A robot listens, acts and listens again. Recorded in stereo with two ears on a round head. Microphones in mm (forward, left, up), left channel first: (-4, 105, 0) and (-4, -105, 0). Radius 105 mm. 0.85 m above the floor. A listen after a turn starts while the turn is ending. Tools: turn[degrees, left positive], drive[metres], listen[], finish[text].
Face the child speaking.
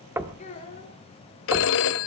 Thought: The child speaking: about 30° left or 150° left.
Action: turn[30]
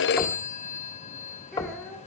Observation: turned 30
Action: finish[Found it: a child speaking, straight ahead.]